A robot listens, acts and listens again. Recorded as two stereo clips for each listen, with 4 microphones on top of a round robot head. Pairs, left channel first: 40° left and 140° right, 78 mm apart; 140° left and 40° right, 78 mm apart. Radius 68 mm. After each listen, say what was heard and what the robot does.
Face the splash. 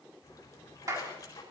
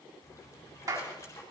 The splash: 85° left. Turn 85° left.
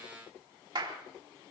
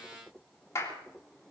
I heard a splash from this way, but can't make it out now.